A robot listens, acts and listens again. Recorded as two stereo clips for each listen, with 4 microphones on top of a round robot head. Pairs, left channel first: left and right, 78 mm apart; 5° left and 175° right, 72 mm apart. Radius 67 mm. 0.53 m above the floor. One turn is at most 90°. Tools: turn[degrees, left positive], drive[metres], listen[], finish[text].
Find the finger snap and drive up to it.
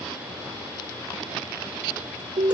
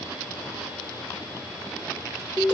Action: listen[]
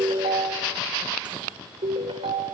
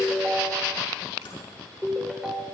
Action: listen[]
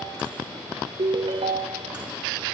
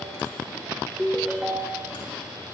Action: finish[I can't make out a finger snap, only a ringtone.]